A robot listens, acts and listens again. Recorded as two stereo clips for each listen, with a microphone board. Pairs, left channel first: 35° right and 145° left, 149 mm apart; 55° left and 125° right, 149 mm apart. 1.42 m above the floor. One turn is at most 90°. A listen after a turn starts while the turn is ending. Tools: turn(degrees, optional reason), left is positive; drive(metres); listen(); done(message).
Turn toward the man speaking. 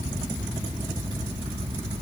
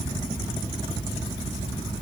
listen()
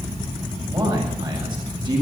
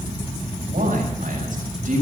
turn(degrees=-90, reason="The man speaking: 155° right.")
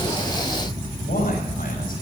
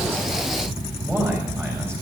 turn(degrees=-50, reason="The man speaking is now 50° right.")
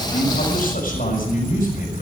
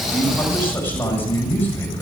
turn(degrees=-20, reason="The man speaking is now 20° right.")
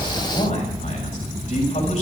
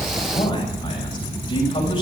done("Found it: a man speaking, straight ahead.")